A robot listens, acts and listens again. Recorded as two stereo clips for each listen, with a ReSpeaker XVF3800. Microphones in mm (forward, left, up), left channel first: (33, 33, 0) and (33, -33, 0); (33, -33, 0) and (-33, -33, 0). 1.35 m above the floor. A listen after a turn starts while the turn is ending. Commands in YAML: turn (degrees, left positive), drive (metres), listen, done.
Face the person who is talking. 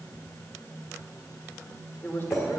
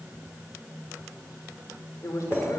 turn: 35
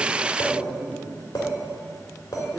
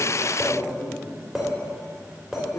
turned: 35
turn: 10
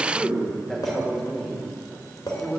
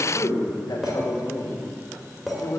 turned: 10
done: "Facing the man speaking."